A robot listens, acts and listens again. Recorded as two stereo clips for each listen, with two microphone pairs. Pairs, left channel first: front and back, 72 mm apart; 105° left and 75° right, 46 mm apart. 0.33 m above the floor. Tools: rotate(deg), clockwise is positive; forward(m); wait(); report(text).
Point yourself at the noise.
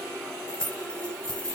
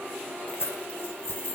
rotate(-85)
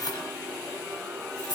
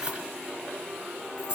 report("Found it: keys jangling, straight ahead.")